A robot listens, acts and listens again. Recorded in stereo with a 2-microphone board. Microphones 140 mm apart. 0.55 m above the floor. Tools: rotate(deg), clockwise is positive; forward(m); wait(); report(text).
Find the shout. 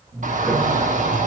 rotate(65)
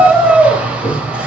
rotate(10)
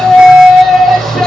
report("Found it: a shout, straight ahead, 2 to 4 m away.")